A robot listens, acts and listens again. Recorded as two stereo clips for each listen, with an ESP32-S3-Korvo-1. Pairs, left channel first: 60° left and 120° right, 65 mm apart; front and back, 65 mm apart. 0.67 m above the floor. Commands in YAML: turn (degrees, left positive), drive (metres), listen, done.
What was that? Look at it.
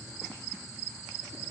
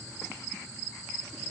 listen: true
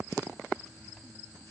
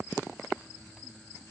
listen: true
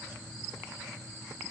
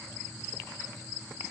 done: "I can't make out anything."